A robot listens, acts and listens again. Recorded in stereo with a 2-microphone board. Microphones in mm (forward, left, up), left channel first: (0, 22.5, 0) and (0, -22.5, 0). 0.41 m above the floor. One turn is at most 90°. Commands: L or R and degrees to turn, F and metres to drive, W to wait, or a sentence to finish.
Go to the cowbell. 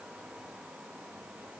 W
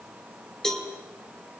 L15
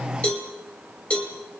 L90
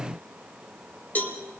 L40
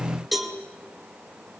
F1.0
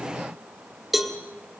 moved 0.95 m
R10
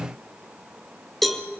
F1.0
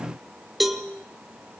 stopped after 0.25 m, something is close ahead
Arrived at the cowbell, straight ahead.